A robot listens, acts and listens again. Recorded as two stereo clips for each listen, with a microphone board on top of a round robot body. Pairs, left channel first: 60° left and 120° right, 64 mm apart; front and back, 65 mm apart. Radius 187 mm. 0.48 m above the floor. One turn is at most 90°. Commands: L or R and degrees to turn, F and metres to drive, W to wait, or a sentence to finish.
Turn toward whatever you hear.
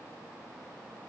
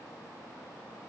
W
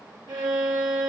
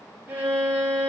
R90
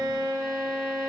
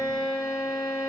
R35
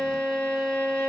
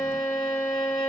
R10
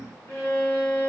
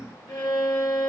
Found it: a violin, straight ahead, 1 to 2 m away.